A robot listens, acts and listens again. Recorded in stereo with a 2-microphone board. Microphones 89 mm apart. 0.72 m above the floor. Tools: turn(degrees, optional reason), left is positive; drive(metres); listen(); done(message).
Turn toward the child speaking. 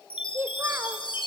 turn(degrees=-30, reason="The child speaking: about 30° right or 150° right.")
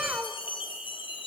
turn(degrees=-15, reason="The child speaking: about 15° right or 165° right.")
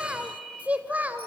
turn(degrees=-20, reason="The child speaking: about 20° right or 160° right.")
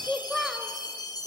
done("Found it: a child speaking, straight ahead.")